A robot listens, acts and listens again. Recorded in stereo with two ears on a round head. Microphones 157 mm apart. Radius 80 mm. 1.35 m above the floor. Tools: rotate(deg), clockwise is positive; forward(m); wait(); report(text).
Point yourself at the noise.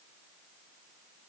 wait()
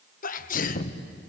rotate(-50)
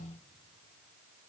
wait()
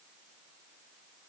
report("I heard a sneeze, but can't make it out now. It was about straight ahead or 80° left.")